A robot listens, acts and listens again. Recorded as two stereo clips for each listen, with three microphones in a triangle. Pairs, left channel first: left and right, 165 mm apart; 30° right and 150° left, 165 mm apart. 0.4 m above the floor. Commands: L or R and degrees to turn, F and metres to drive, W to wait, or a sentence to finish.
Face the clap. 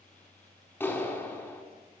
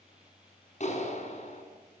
L10
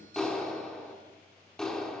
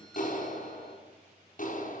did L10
Found it: a clap, straight ahead, over 4 m away.